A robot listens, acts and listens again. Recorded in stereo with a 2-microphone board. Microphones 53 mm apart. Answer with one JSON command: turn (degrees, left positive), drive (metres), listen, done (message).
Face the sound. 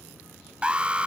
{"turn": -20}
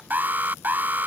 {"turn": -140}
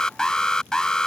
{"turn": 15}
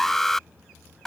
{"done": "Found it: an alarm, straight ahead."}